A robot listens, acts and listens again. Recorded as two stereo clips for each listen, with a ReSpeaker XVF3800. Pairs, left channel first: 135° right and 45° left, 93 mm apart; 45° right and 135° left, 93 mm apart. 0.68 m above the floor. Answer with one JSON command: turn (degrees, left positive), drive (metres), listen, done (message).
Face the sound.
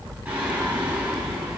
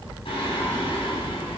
{"turn": -30}
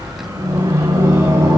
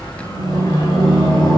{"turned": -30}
{"done": "Found it: singing, straight ahead, 2 to 4 m away."}